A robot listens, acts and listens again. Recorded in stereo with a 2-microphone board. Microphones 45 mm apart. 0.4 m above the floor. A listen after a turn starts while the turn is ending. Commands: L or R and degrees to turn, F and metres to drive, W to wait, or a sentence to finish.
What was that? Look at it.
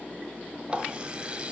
R25
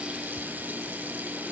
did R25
W
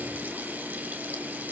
W
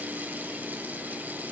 I heard a running tap, but can't make it out now. It was about straight ahead or 130° right.